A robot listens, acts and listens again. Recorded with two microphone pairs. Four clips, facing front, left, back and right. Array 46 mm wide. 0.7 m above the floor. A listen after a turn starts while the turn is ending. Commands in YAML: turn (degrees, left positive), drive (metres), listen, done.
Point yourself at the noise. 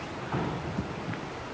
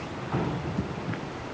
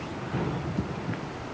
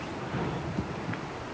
turn: 40
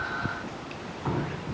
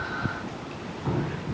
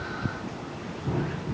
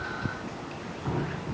done: "Facing the dripping, 2 to 4 m away."